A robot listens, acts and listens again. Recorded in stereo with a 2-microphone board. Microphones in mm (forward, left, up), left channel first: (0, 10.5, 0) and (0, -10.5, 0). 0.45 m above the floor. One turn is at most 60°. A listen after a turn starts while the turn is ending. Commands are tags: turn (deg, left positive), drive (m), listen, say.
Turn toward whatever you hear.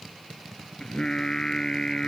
<turn deg="35"/>
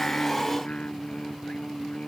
<turn deg="60"/>
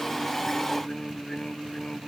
<turn deg="45"/>
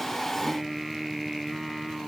<say>Facing the singing.</say>